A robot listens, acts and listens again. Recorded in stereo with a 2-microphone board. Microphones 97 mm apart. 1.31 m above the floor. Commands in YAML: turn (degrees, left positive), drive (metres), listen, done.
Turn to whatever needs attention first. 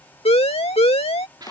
turn: 90
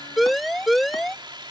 done: "Facing the siren."